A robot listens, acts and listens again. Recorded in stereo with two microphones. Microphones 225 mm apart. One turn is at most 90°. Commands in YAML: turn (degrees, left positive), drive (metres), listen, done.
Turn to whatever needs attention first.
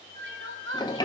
turn: -60
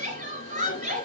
turn: -35
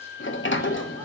listen: true
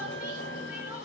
listen: true
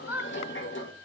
turn: -10
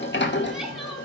listen: true
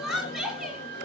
done: "Facing the crying."